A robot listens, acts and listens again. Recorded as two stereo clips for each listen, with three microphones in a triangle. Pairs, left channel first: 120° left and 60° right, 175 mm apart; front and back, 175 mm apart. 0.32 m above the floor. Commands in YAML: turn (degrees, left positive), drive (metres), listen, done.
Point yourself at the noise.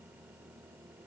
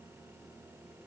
listen: true
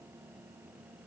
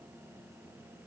listen: true
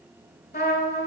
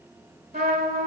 turn: 135
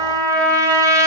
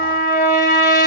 turn: 10
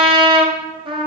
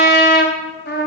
done: "Facing the trumpet, 1 to 2 m away."